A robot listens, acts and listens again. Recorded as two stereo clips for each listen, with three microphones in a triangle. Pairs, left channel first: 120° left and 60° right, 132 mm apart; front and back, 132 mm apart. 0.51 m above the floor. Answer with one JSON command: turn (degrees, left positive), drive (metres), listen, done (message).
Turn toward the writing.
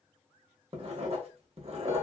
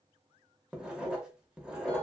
{"turn": -95}
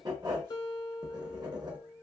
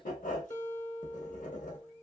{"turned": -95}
{"done": "Found it: writing, straight ahead, under 1 m away."}